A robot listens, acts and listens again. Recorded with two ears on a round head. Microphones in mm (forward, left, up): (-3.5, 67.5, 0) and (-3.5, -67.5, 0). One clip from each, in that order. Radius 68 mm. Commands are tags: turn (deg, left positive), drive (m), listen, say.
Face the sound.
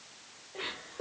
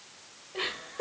<turn deg="-55"/>
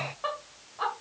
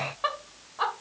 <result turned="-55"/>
<turn deg="-30"/>
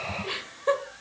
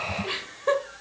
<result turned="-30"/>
<say>Found it: laughter, straight ahead.</say>